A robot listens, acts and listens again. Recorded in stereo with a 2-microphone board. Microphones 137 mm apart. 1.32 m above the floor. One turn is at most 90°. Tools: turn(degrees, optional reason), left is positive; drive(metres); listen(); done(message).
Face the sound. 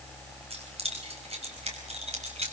turn(degrees=-50, reason="The keys jangling: about 50° right or 130° right.")
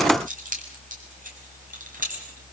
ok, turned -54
turn(degrees=-80, reason="So it is at 80° right.")
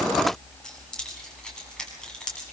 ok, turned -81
done("Found it: keys jangling, straight ahead, over 4 m away.")